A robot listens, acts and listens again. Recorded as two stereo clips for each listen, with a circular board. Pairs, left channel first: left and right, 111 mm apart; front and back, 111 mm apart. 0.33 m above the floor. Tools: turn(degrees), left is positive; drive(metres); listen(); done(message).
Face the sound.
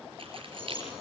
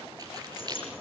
turn(degrees=-130)
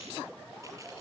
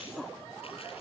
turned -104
turn(degrees=-25)
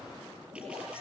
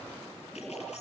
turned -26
listen()
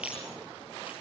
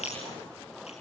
turn(degrees=-10)
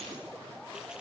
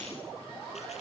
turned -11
listen()
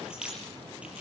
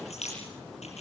turn(degrees=-10)
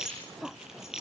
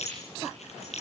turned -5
done("Found it: keys jangling, straight ahead.")